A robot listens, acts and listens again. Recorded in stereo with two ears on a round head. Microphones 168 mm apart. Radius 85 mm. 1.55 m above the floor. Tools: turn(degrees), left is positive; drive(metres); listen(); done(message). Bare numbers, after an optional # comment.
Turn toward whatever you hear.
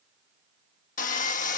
# The sawing: about 45° left or 135° left.
turn(45)
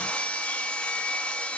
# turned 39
# So it is at 10° left.
turn(10)
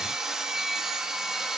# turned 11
done("Facing the sawing.")